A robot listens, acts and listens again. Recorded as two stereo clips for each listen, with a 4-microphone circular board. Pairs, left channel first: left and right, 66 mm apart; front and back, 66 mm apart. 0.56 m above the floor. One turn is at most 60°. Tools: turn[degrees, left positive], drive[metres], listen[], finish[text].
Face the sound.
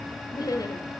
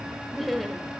Thought: The laughter: 90° left.
Action: turn[60]
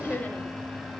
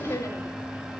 Thought: The laughter is now 30° left.
Action: turn[30]
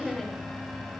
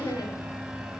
Action: finish[Found it: laughter, straight ahead.]